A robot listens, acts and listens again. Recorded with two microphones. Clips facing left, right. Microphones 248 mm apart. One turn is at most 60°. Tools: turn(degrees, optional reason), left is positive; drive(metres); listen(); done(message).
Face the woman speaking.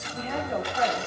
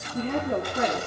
turn(degrees=-50, reason="The woman speaking: about 50° right or 130° right.")
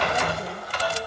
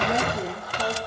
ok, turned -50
turn(degrees=-60, reason="So it is at 80° right.")
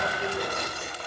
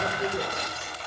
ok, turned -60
turn(degrees=-30, reason="The woman speaking is now 30° right.")
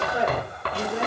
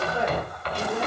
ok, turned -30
turn(degrees=20, reason="The woman speaking is now 20° left.")
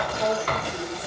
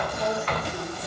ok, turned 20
turn(degrees=10, reason="The woman speaking is now 10° left.")
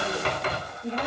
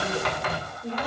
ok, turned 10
done("Facing the woman speaking.")